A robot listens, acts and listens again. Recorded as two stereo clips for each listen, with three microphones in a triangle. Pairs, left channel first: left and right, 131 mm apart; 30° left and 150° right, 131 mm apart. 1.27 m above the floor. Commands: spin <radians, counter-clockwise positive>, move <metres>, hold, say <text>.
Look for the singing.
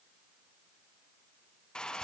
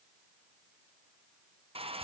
hold
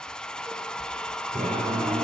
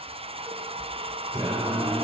spin -1.57
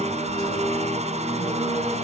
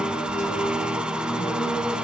spin 0.52
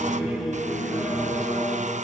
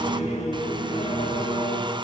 say Found it: singing, straight ahead, over 4 m away.